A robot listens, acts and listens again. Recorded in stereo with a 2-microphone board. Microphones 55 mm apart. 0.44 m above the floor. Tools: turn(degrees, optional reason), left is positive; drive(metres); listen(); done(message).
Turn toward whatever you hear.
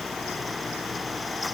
listen()
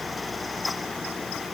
listen()
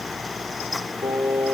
turn(degrees=-90)
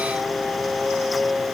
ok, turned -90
turn(degrees=10, reason="So it is at 10° left.")
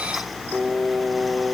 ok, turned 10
done("Found it: singing, straight ahead, over 4 m away.")